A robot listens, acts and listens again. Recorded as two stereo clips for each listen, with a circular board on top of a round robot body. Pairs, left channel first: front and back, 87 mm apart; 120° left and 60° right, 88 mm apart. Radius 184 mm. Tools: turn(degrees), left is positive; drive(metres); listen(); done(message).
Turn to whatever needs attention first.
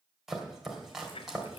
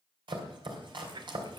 listen()
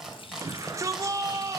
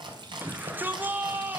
turn(degrees=-130)
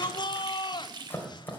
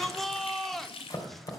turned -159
turn(degrees=35)
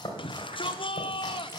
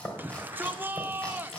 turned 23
turn(degrees=10)
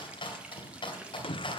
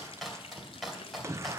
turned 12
done("Found it: a shout, straight ahead.")